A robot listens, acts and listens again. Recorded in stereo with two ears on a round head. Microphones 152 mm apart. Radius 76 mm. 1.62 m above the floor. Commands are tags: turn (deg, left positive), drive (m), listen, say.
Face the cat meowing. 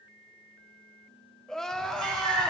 <turn deg="-55"/>
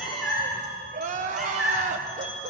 <say>Found it: a cat meowing, straight ahead.</say>